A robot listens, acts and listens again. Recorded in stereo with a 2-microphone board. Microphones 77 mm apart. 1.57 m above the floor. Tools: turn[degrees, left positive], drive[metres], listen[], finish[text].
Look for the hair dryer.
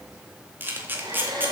Thought: The hair dryer: about 70° right or 110° right.
Action: turn[-70]
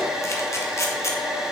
Thought: So it is at 10° right.
Action: turn[-10]
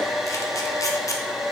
Action: finish[Found it: a hair dryer, straight ahead.]